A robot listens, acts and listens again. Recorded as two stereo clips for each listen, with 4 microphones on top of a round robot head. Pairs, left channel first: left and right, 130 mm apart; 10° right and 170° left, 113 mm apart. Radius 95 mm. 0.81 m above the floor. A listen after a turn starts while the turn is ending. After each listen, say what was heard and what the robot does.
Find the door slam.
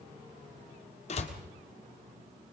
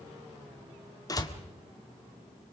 The door slam: 50° left. Turn 50° left.
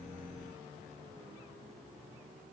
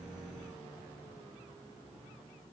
I heard a door slam from this way, but can't make it out now.